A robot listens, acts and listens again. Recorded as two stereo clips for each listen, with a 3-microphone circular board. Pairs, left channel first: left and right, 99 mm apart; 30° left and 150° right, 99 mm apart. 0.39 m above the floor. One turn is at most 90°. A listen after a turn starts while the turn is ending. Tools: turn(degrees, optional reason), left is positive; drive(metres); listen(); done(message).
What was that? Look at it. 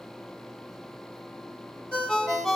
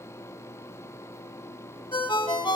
turn(degrees=10, reason="The ringtone: 10° left.")
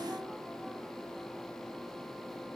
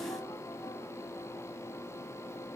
listen()
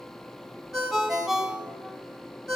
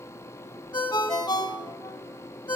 done("Facing the ringtone, 1 to 2 m away.")